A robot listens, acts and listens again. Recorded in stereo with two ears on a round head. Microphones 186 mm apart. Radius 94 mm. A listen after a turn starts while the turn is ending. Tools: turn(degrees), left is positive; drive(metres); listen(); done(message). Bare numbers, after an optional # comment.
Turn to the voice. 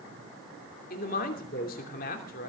# The man speaking: about 45° left or 135° left.
turn(45)
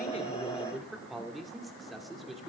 done("Found it: a man speaking, straight ahead, 2 to 4 m away.")